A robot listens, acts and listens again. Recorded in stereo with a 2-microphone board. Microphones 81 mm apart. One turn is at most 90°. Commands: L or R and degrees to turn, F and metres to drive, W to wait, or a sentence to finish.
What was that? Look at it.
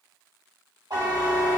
R65
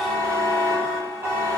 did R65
R40
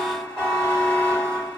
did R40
L10
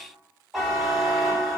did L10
Facing the buzzer, under 1 m away.